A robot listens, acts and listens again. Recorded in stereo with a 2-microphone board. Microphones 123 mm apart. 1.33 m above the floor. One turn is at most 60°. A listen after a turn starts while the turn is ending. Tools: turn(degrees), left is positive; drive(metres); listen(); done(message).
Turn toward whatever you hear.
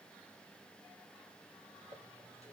turn(degrees=60)
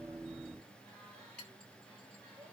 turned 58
turn(degrees=10)
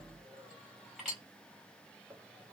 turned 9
done("Found it: a clink, straight ahead.")